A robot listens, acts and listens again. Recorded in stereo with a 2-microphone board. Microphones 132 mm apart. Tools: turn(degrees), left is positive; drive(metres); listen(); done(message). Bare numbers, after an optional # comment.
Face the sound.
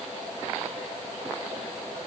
listen()
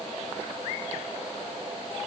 listen()
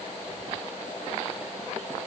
done("I can't make out anything to turn to.")